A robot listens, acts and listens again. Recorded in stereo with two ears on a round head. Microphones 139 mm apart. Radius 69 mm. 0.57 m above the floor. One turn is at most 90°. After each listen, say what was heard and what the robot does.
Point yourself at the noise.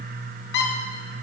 Turn 90° left.
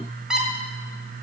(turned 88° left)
Found it: a squeak, straight ahead.